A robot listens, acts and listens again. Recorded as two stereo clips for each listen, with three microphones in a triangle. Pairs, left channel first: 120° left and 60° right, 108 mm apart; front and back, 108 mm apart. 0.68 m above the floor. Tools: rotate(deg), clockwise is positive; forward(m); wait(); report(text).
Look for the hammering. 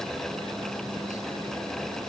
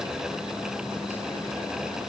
wait()
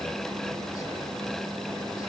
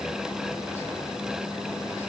wait()
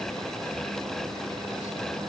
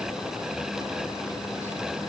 report("I can't make out hammering to turn to.")